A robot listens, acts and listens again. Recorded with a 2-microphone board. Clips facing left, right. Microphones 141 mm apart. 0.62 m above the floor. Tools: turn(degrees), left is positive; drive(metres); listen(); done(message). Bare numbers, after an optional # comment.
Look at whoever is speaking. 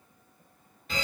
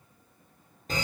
listen()
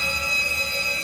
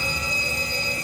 listen()
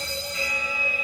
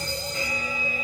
done("I can't make out anyone speaking to turn to.")